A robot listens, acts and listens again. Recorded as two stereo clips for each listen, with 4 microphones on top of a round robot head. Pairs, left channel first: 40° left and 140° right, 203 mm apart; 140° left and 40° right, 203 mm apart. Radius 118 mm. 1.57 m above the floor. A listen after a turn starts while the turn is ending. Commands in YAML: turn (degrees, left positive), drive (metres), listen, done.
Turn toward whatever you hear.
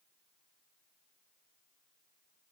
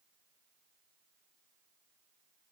listen: true
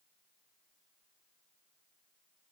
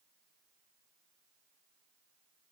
listen: true
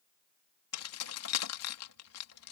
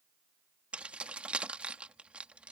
turn: 45
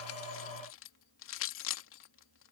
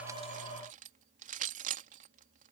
turn: 15
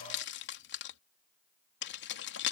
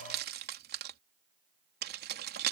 done: "Facing the keys jangling."